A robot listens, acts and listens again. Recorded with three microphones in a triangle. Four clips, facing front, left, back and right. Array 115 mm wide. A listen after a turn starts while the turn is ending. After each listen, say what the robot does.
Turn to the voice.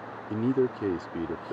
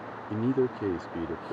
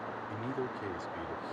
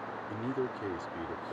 Turn 30° left.
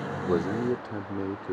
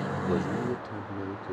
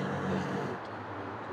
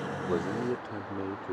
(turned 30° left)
Turn 10° right.
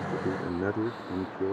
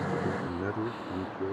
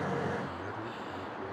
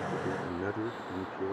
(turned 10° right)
Facing the man speaking.